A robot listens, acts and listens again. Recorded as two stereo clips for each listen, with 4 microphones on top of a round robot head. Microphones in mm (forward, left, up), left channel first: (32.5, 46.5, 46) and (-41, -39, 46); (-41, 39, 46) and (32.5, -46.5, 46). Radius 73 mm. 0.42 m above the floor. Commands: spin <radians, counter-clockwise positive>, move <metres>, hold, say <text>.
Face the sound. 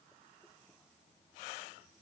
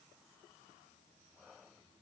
hold
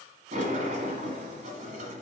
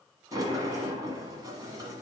spin -1.92
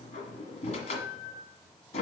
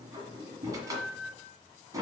spin 0.26
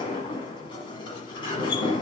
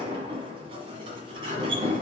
say Facing the sliding door, 1 to 2 m away.